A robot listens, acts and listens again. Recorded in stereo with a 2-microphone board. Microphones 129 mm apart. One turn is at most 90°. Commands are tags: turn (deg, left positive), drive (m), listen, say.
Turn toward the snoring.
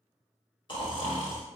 <turn deg="40"/>
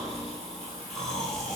<say>Found it: snoring, straight ahead.</say>